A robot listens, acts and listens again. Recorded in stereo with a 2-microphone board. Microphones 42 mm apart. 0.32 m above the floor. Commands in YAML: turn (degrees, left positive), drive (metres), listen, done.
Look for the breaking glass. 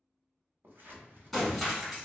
turn: 30
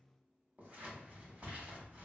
listen: true
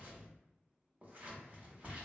done: "I heard breaking glass, but can't make it out now. It was about 30° right or 150° left."